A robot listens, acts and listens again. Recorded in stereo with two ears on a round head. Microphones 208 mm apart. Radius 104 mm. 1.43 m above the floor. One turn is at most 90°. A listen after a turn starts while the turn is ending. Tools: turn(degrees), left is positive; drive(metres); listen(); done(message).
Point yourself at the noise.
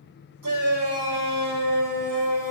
turn(degrees=-65)
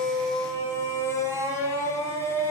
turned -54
turn(degrees=-10)
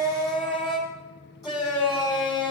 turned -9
done("Found it: a shout, straight ahead, over 4 m away.")